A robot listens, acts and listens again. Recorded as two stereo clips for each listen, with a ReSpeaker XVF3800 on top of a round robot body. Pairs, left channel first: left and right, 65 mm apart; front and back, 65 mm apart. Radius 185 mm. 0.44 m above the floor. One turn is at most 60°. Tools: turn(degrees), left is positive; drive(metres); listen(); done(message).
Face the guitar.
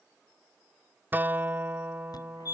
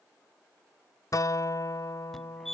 turn(degrees=-30)
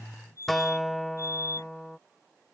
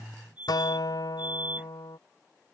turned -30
done("Facing the guitar.")